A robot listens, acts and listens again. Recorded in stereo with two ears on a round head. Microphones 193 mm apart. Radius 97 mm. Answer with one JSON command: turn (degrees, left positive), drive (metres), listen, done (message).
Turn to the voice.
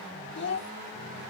{"turn": 55}
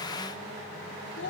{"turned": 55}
{"turn": 60}
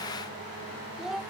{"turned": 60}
{"done": "Found it: a child speaking, straight ahead."}